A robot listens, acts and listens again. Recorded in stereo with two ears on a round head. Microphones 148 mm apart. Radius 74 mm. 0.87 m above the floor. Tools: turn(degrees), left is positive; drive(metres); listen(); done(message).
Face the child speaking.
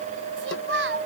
turn(degrees=-90)
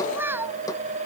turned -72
turn(degrees=-15)
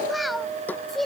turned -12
done("Facing the child speaking.")